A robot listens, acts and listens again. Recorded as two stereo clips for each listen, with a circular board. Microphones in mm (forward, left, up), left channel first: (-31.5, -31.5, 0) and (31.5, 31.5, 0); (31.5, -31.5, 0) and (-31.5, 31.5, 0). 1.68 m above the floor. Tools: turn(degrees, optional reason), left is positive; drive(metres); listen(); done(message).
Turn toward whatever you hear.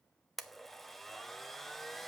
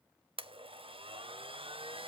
turn(degrees=135, reason="The blender: 135° left.")
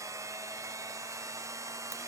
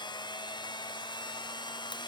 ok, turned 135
turn(degrees=-10, reason="The blender is now 10° right.")
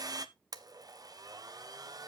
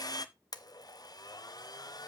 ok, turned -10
done("Facing the blender, under 1 m away.")